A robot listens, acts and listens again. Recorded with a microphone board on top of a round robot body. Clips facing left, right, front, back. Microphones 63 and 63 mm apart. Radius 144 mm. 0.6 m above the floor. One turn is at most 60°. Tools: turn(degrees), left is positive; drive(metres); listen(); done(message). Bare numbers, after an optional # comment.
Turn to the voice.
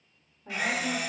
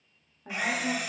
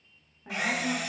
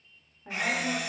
# The woman speaking: 80° right.
turn(-60)
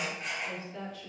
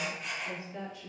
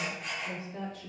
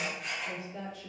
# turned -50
# The woman speaking is now 30° right.
turn(-30)
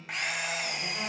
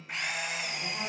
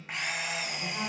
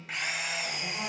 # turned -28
done("Facing the woman speaking, 1 to 2 m away.")